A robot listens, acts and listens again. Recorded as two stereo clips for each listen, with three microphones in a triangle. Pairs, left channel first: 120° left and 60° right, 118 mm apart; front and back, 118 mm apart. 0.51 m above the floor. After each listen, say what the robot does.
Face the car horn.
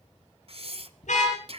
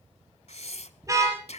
Turn 120° left.
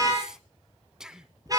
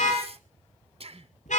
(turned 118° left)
Found it: a car horn, straight ahead.